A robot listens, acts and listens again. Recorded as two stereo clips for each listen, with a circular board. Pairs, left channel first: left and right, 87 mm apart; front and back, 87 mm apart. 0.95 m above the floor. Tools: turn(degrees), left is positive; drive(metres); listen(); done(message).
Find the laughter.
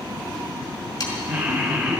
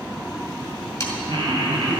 turn(degrees=-170)
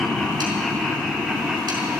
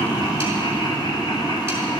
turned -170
turn(degrees=-15)
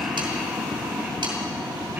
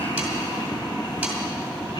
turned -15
turn(degrees=-20)
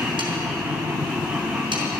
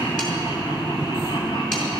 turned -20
done("Facing the laughter, 2 to 4 m away.")